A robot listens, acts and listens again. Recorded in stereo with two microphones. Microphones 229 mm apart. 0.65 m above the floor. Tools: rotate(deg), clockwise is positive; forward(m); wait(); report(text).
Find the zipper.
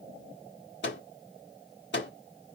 wait()
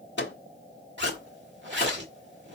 rotate(55)
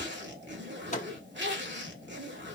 rotate(60)
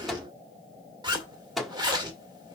rotate(20)
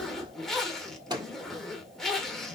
report("Found it: a zipper, straight ahead, 1 to 2 m away.")